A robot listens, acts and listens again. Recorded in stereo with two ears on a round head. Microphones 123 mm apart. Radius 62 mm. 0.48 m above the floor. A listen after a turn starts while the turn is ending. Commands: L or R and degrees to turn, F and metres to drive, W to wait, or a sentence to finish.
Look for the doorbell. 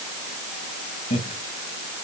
W
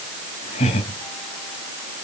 W
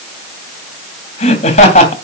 I can't make out a doorbell, only laughter.